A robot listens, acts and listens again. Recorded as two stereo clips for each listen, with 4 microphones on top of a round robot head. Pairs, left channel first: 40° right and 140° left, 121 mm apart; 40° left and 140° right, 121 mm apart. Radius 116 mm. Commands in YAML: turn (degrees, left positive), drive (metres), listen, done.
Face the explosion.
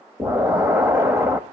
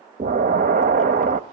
turn: -150
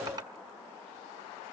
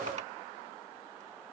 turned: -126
turn: -20
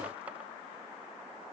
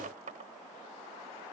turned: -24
done: "Facing where the explosion came from. I can't hear it now."